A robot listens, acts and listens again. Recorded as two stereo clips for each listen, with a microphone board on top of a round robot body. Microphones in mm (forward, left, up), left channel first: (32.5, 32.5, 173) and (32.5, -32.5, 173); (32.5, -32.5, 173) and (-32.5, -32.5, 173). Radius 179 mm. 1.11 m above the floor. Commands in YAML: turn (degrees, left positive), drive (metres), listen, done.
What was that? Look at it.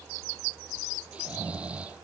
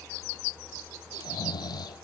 turn: -20
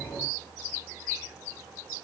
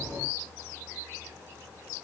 listen: true
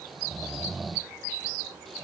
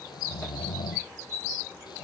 done: "Facing the snoring."